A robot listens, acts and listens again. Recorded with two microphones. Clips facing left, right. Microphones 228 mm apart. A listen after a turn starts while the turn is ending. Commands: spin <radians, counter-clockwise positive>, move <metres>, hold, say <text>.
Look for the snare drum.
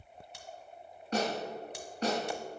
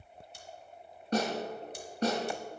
spin -0.61
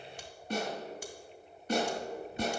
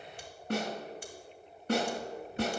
spin -1.83
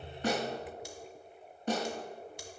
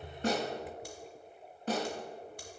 say Facing the snare drum, 2 to 4 m away.